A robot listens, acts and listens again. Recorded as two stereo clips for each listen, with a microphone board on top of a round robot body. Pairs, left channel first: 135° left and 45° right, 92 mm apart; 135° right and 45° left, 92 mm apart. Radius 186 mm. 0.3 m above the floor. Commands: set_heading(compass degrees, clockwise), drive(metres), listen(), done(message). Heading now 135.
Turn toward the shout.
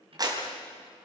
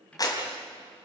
listen()
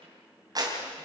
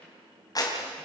listen()
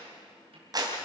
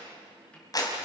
done("I can't make out a shout to turn to.")